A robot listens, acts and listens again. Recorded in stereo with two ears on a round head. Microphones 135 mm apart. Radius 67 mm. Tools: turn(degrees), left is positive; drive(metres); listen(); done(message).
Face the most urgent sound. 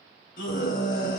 turn(degrees=65)
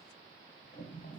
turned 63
listen()
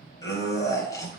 turn(degrees=25)
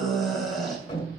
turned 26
done("Facing the scream, 2 to 4 m away.")